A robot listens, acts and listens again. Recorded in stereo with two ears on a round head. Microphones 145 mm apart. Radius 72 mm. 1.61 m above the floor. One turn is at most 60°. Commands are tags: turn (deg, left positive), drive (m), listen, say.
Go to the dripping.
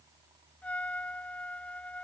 <listen/>
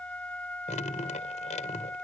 <turn deg="45"/>
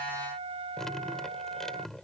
<drive m="1.0"/>
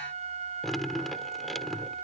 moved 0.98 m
<drive m="1.0"/>
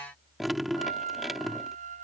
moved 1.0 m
<drive m="1.0"/>
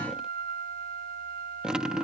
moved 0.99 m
<drive m="1.0"/>
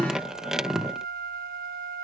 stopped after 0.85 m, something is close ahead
<say>I am next to the dripping.</say>